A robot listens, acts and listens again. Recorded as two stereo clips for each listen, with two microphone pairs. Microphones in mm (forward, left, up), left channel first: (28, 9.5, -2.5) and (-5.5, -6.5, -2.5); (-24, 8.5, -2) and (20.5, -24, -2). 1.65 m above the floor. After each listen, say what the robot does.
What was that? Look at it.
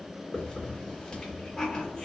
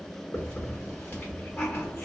Turn 100° left.
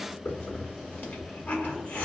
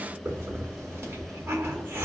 Facing the hiss, under 1 m away.